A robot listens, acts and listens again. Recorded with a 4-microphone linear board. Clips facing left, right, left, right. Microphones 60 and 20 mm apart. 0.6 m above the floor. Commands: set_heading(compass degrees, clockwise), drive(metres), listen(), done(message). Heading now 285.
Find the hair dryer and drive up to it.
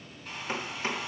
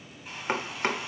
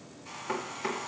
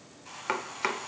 set_heading(315)
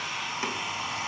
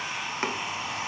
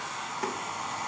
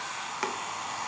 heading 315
set_heading(95)
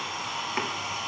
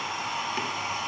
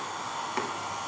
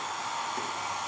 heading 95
set_heading(140)
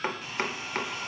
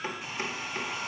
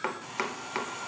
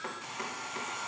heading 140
set_heading(160)
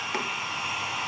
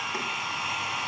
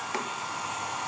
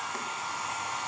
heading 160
drive(1.0)
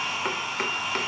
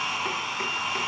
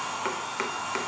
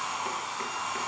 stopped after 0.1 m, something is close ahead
done("Something is in my way. I am facing the hair dryer but have not reached it.")